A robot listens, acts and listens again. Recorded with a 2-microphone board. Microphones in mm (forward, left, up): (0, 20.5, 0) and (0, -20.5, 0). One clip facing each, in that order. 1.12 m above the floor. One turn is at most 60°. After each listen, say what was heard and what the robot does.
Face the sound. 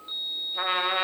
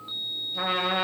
Turn 30° left.
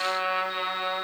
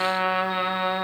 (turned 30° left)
So it is at 15° right. Turn 15° right.
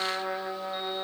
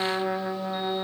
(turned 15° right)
Found it: a trumpet, straight ahead, under 1 m away.